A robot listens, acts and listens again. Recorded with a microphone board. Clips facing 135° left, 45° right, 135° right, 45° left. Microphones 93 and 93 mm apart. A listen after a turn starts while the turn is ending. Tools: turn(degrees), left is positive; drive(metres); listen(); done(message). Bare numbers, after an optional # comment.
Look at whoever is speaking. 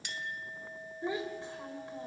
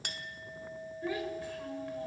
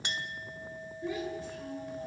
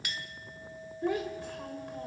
# The child speaking: 70° left.
turn(70)
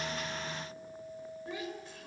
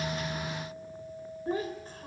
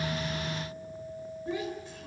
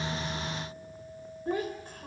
done("Found it: a child speaking, straight ahead.")